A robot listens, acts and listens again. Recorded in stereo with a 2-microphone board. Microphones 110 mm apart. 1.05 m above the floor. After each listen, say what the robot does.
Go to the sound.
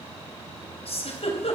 Turn 60° left.
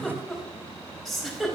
Drive 1.0 m forward.
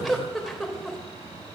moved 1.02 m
Drive 1.0 m forward.
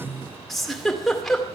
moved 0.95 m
Drive 1.0 m forward.
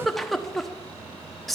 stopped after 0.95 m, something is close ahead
Arrived at the giggle, straight ahead.